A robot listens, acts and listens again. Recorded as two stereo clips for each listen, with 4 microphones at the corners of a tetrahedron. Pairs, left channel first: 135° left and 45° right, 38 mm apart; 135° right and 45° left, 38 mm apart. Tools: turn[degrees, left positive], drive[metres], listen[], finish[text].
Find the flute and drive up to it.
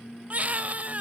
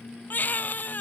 Action: listen[]
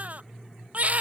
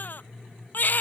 Action: listen[]
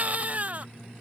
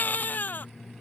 Action: finish[I can't make out a flute, only a baby crying.]